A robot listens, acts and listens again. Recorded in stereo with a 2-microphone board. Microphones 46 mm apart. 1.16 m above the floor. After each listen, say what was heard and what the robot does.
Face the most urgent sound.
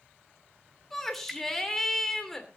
Turn 30° left.
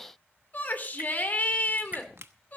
So it is at 145° left. Turn 145° left.
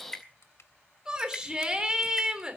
The shout is now 15° right. Turn 15° right.
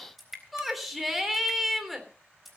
Found it: a shout, straight ahead, 2 to 4 m away.